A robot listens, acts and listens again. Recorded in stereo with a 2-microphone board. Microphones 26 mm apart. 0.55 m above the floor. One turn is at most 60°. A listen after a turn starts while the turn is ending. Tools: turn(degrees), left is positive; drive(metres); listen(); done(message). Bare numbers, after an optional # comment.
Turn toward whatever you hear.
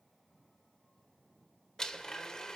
# The blender: about 25° left or 155° left.
turn(25)
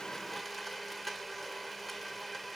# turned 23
done("Facing the blender, 1 to 2 m away.")